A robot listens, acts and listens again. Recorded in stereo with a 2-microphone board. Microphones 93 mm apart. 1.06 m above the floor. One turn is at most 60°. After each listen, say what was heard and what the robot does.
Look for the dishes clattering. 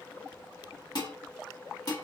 The dishes clattering: about 50° left or 130° left. Turn 50° left.
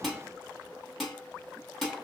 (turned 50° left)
Found it: dishes clattering, straight ahead, 1 to 2 m away.